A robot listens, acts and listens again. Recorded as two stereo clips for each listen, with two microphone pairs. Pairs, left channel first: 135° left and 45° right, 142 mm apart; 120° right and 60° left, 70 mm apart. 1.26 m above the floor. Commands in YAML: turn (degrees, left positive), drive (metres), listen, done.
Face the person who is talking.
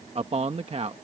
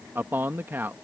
done: "Found it: a man speaking, straight ahead."